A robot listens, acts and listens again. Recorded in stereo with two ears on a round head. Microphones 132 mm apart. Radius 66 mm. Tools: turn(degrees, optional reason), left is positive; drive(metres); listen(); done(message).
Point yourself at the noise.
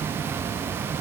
listen()
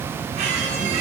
turn(degrees=-50, reason="The squeak: about 50° right or 130° right.")
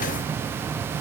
listen()
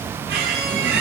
turn(degrees=-75, reason="So it is at 75° right.")
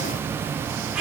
done("Facing the squeak, over 4 m away.")